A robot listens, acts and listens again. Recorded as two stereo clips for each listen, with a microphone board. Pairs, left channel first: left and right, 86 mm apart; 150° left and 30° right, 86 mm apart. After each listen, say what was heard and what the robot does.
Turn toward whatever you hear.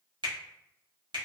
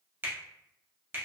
The finger snap: 90° right. Turn 90° right.
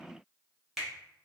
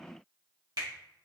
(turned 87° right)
Facing the finger snap, under 1 m away.